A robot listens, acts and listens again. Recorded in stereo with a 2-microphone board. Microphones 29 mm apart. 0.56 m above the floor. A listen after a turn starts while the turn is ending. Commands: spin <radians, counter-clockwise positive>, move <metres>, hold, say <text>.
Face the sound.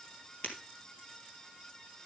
spin 0.79
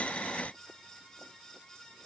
hold
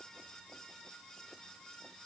say I heard breaking glass, but can't make it out now. It was about straight ahead or 90° left.